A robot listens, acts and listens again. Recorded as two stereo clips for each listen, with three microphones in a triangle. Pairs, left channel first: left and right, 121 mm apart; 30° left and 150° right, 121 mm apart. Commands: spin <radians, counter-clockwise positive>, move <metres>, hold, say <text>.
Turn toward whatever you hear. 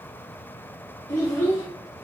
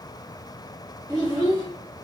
spin 2.71
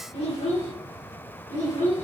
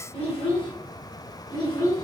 spin 1.57
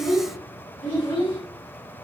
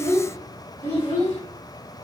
spin 0.79
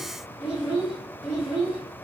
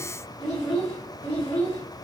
say Facing the child speaking, 1 to 2 m away.